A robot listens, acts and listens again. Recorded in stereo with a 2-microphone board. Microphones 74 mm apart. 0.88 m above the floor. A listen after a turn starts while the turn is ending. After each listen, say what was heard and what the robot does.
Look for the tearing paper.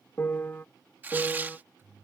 The tearing paper: about 25° right or 155° right. Turn 25° right.
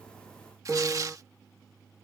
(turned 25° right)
So it is at 125° right. Turn 125° right.
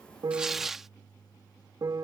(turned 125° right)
Facing the tearing paper.